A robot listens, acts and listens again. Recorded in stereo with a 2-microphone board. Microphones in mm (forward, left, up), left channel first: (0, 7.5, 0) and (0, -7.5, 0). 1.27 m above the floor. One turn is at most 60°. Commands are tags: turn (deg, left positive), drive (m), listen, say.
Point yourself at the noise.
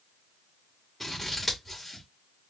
<turn deg="30"/>
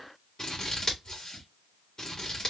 <turn deg="60"/>
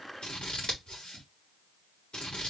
<turn deg="60"/>
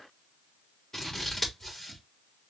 <turn deg="30"/>
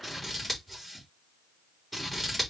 <say>Found it: scissors, straight ahead.</say>